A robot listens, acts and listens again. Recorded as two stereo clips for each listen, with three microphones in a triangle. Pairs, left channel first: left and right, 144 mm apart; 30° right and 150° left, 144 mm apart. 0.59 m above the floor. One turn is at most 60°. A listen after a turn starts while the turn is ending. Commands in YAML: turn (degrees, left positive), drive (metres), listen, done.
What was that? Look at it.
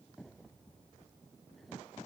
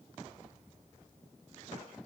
listen: true
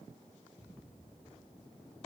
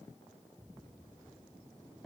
listen: true
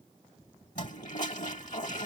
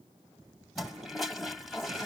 turn: 60
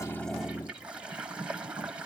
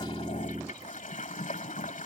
turn: -10
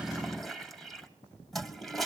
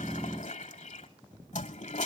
done: "Facing the toilet flushing."